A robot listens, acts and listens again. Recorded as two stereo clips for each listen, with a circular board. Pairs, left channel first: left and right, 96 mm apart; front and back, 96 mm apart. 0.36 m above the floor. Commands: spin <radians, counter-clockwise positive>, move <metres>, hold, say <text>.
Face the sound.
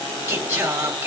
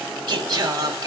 spin -2.53
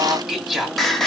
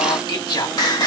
say Facing the singing.